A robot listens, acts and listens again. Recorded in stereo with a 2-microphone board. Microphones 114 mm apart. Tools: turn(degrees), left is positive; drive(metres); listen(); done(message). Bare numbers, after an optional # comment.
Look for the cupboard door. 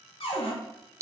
# The cupboard door: about 60° left or 120° left.
turn(60)
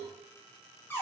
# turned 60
# So it is at 20° left.
turn(20)
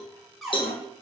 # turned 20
done("Found it: a cupboard door, straight ahead, under 1 m away.")